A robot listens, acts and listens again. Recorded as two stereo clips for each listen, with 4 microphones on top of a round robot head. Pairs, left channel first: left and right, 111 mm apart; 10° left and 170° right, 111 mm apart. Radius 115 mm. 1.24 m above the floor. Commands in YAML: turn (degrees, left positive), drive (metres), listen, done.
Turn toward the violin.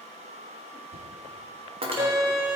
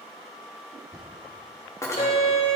turn: -25
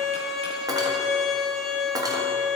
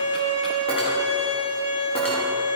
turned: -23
done: "Facing the violin."